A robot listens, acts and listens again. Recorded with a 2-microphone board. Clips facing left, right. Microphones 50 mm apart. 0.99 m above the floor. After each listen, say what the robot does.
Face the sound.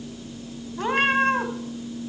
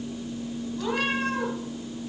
Turn 40° left.
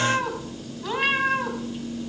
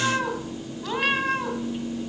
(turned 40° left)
Found it: a cat meowing, straight ahead, 2 to 4 m away.